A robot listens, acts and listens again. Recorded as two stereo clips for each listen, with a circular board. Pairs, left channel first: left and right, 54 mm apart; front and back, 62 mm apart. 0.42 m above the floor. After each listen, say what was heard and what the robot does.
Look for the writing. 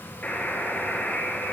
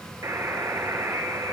Keep listening.
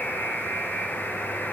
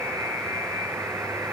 Keep listening.
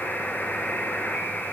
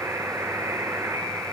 I can't make out writing, only a buzzer.